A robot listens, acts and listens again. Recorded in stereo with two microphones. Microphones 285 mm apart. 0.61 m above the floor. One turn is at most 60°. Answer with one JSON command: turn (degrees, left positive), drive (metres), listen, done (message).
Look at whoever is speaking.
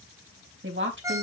{"turn": -40}
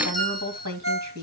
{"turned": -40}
{"turn": -60}
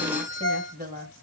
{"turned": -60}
{"turn": -30}
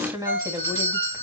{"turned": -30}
{"turn": -10}
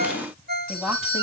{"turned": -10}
{"done": "Facing the woman speaking."}